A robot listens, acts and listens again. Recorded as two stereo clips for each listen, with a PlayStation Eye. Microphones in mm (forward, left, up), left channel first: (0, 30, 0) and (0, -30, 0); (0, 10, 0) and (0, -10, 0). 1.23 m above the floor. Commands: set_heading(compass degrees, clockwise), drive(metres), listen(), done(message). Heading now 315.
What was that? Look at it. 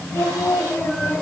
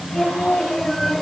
set_heading(275)
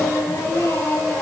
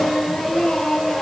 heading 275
set_heading(175)
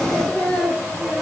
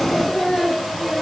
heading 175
set_heading(165)
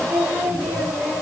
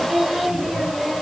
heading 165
done("Found it: singing, straight ahead.")